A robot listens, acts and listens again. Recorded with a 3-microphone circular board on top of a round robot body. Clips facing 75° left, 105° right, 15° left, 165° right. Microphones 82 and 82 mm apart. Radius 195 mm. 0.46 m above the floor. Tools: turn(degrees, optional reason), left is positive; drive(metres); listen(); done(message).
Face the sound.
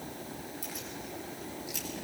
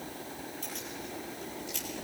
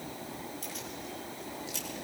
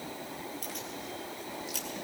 turn(degrees=155, reason="The keys jangling: 155° left.")
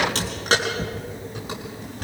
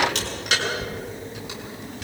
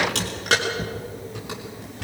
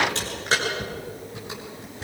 turn(degrees=30, reason="The keys jangling is now 30° left.")
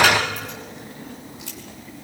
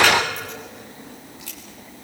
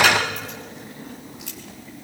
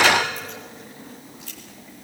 done("Facing the keys jangling, over 4 m away.")